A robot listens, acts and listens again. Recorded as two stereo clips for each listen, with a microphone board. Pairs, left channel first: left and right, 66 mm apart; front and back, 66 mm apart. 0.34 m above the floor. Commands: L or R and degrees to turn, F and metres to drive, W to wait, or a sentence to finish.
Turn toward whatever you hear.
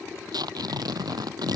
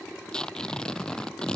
R80
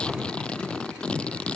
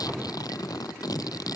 L15
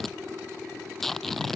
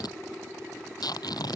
Facing the tearing paper.